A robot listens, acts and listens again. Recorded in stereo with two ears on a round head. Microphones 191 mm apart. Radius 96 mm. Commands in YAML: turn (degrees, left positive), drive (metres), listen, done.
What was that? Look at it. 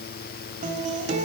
turn: -35
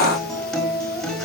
done: "Facing the guitar."